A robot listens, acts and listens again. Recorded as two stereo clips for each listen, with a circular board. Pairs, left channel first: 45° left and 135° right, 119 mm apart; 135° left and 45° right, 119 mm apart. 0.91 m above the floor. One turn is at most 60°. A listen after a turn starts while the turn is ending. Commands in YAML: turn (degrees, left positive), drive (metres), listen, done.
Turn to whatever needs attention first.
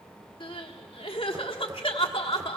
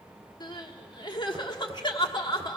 turn: 60
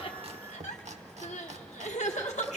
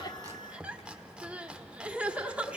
turn: 35
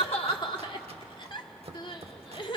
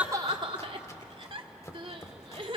done: "Found it: crying, straight ahead, 1 to 2 m away."